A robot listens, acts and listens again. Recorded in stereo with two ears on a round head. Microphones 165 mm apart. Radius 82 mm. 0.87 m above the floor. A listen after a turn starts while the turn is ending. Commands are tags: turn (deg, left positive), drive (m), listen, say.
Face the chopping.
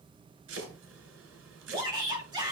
<turn deg="-90"/>
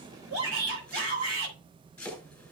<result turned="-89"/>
<say>Facing the chopping, over 4 m away.</say>